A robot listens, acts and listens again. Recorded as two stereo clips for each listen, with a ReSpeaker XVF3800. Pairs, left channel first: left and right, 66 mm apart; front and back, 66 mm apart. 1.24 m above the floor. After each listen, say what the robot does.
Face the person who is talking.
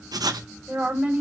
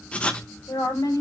Turn 15° right.
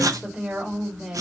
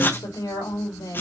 Found it: a woman speaking, straight ahead, over 4 m away.